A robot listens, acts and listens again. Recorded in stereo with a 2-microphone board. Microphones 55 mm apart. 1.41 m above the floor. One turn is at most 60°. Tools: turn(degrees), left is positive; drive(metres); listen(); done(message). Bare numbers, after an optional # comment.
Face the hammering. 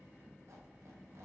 listen()
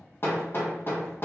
# The hammering: about 45° left or 135° left.
turn(45)
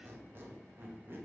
listen()
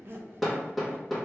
done("Found it: hammering, straight ahead.")